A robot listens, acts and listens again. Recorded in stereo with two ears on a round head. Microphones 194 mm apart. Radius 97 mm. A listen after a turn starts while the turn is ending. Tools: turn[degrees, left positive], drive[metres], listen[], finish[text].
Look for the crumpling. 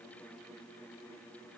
Action: listen[]
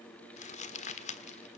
Thought: The crumpling: about 35° left or 145° left.
Action: turn[35]
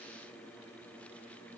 Action: listen[]
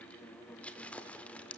Action: finish[Facing the crumpling.]